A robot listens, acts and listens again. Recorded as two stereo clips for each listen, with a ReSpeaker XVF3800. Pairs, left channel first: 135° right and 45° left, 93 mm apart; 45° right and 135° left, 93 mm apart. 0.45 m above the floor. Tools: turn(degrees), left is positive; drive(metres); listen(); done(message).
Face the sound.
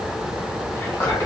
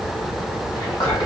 turn(degrees=-75)
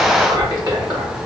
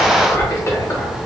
turn(degrees=10)
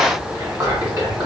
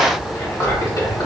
done("Facing the whispering.")